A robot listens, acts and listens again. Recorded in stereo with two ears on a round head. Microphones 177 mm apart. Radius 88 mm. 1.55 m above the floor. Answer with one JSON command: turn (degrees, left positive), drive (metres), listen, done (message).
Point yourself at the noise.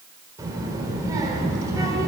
{"turn": -20}
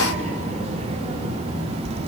{"turn": -35}
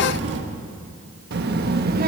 {"turn": -130}
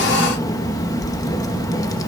{"turn": 20}
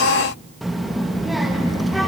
{"done": "Facing the child speaking, 1 to 2 m away."}